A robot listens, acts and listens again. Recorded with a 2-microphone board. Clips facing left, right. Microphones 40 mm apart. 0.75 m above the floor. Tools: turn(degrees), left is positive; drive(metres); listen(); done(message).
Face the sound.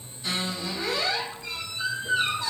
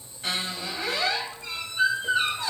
turn(degrees=-55)
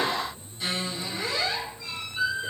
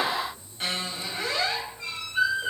turn(degrees=-60)
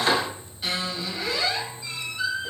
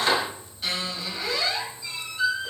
done("Facing the squeak, 1 to 2 m away.")